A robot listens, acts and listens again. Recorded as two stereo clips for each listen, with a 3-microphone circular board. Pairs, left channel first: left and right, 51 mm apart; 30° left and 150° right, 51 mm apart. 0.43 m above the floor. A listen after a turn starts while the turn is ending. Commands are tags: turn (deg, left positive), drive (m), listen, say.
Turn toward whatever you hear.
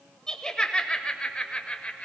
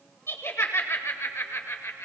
<turn deg="30"/>
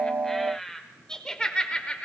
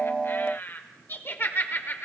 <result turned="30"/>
<turn deg="40"/>
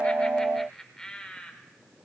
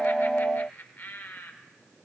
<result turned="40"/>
<turn deg="35"/>
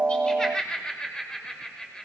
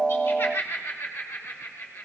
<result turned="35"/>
<turn deg="20"/>
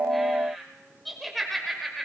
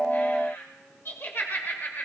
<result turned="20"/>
<say>Found it: laughter, straight ahead, 1 to 2 m away.</say>